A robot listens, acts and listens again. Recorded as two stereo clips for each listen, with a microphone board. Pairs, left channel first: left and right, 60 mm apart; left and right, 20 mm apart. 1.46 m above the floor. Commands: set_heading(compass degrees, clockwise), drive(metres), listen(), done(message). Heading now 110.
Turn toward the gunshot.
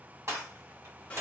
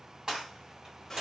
set_heading(165)
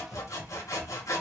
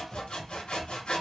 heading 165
listen()
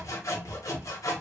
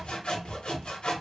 done("I heard a gunshot, but can't make it out now. It was about straight ahead or 70° right.")